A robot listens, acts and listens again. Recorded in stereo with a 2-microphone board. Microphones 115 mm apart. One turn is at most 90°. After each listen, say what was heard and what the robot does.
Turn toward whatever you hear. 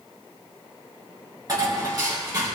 The dishes clattering: about 35° right or 145° right. Turn 35° right.
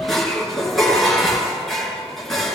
Facing the dishes clattering.